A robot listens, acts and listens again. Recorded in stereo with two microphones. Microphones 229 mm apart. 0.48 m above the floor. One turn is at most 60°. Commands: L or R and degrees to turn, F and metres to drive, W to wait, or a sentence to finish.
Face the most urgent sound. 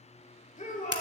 L30
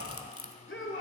L60
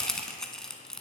L50
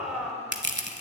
Found it: a shout, straight ahead.